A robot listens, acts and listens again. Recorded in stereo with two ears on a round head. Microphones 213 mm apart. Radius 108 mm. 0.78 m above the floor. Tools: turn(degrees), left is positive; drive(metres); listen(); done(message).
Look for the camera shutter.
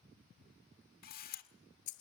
turn(degrees=35)
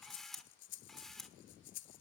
done("Found it: a camera shutter, straight ahead.")